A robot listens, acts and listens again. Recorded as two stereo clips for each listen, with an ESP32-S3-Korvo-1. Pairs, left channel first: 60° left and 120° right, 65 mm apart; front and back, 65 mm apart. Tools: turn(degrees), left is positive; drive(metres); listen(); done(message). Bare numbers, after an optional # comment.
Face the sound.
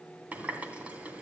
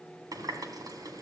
# The running tap: 175° left.
turn(175)
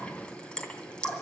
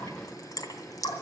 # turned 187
# The running tap is now 15° right.
turn(-15)
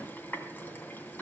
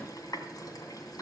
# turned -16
done("Found it: a running tap, straight ahead, 2 to 4 m away.")